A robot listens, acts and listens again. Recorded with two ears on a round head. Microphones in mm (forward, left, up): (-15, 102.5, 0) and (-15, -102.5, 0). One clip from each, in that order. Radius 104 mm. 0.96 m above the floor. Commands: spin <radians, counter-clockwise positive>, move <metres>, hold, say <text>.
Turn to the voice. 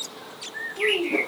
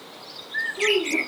spin 0.52
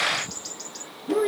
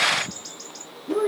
spin 2.09
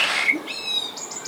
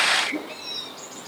hold
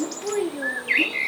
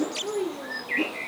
spin 0.96
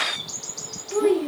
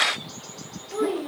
say Facing the child speaking, 2 to 4 m away.